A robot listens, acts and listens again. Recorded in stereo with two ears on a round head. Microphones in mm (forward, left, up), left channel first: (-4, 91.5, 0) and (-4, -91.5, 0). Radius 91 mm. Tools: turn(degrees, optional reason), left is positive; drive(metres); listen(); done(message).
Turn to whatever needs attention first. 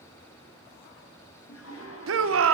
turn(degrees=-90)
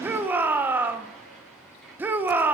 turn(degrees=-10, reason="So it is at 10° right.")
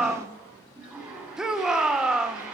done("Found it: a shout, straight ahead.")